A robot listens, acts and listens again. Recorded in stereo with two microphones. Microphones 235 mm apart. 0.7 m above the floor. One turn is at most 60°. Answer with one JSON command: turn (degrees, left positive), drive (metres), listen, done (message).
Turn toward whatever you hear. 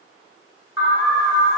{"turn": 55}
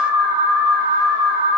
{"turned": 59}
{"turn": 50}
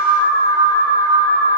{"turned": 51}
{"done": "Facing the alarm, 1 to 2 m away."}